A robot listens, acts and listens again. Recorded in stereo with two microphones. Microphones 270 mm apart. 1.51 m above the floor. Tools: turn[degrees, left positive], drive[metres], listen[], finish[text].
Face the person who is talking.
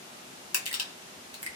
Action: listen[]
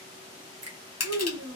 Thought: The child speaking: about 60° right or 120° right.
Action: turn[-60]
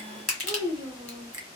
Thought: So it is at 10° right.
Action: turn[-10]
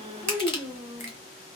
Action: finish[Found it: a child speaking, straight ahead.]